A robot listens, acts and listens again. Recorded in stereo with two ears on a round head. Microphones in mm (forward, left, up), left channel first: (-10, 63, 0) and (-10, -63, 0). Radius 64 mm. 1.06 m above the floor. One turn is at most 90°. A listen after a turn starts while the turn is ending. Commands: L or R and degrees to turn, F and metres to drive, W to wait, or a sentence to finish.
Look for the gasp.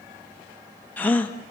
L30
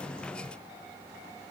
W
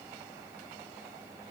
I heard a gasp, but can't make it out now. It was about 20° right or 140° left.